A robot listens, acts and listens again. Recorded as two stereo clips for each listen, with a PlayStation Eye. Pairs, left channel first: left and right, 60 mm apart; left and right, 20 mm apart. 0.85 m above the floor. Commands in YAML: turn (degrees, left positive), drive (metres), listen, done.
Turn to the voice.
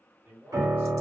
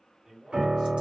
turn: -30
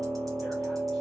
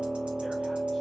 listen: true
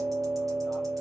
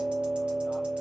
listen: true
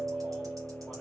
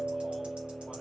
done: "I heard a man speaking, but can't make it out now. It was about straight ahead or 120° right."